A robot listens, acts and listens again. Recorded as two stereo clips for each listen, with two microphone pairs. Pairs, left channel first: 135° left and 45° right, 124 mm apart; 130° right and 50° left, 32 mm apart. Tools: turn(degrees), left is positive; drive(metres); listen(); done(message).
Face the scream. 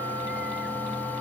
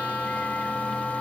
listen()
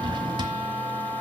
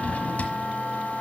listen()
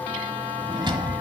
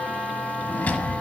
done("I can't make out a scream, only a drawer.")